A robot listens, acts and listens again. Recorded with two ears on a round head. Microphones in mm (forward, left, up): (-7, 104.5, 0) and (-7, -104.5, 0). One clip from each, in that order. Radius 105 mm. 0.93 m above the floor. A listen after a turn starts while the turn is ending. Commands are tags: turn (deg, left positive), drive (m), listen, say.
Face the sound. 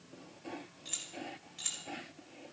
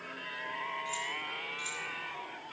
<turn deg="25"/>
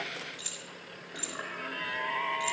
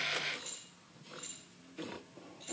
<turn deg="130"/>
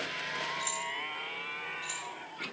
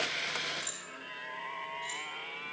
<say>Facing the keys jangling.</say>